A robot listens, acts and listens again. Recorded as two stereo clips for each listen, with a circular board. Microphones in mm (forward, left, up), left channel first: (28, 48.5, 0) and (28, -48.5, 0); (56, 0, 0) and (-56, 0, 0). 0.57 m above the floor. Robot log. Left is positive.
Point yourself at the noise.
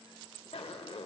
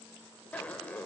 note: The zipper: 75° left.
cmd yaw +75
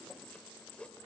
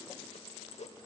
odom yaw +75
note: The zipper is now 10° left.
cmd yaw +10
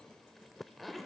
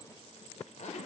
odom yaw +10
end: Found it: a zipper, straight ahead, under 1 m away.